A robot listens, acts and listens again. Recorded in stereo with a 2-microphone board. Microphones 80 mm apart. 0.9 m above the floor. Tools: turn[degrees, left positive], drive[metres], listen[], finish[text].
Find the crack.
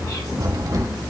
Thought: The crack: about 55° right or 125° right.
Action: turn[-55]
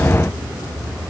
Action: listen[]
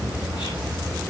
Action: finish[I heard a crack, but can't make it out now. It was about straight ahead or 70° right.]